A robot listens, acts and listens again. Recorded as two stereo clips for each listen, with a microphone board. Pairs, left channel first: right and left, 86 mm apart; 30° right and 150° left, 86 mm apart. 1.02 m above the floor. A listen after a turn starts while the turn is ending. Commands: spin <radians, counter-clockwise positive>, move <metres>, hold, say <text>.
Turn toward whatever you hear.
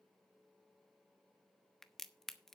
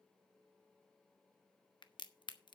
say Found it: a crack, straight ahead.